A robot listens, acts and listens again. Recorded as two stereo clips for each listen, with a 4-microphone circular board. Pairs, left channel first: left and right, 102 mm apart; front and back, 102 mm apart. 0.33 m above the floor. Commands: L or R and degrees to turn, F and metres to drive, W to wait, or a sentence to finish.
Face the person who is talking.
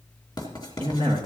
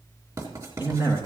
R115
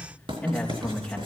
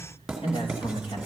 L15
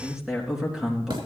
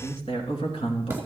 Found it: a man speaking, straight ahead.